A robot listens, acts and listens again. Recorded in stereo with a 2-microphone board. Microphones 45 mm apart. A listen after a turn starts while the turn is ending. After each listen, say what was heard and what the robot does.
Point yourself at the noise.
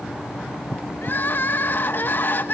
The crying: about 45° left or 135° left. Turn 45° left.
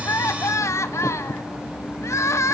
So it is at 90° left. Turn 90° left.
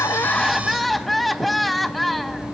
Facing the crying.